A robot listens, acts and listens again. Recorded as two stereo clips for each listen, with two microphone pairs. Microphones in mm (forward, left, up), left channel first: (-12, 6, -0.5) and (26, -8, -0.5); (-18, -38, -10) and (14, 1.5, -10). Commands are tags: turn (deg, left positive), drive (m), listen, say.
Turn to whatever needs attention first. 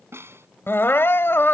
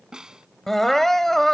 <turn deg="150"/>
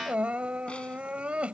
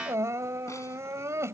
<turn deg="35"/>
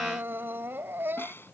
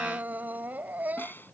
<say>Facing the crying.</say>